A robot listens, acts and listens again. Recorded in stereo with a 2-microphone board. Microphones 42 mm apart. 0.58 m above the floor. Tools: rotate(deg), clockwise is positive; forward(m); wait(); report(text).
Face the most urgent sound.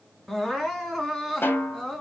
rotate(-30)
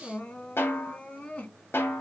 rotate(-140)
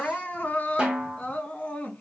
rotate(-30)
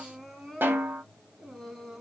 report("Facing the crying, 1 to 2 m away.")